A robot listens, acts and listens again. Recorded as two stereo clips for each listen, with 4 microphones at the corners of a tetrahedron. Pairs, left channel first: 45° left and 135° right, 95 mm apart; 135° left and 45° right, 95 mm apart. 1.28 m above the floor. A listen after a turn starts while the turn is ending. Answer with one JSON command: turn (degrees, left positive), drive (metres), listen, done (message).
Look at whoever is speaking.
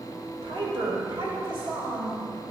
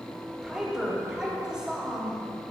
{"turn": -125}
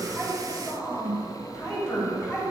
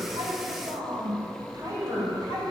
{"done": "Facing the woman speaking."}